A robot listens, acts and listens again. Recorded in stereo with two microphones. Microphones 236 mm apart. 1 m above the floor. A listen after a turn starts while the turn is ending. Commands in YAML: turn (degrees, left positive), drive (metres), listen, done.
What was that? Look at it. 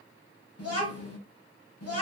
turn: 90
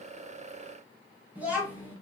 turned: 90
done: "Found it: a child speaking, straight ahead."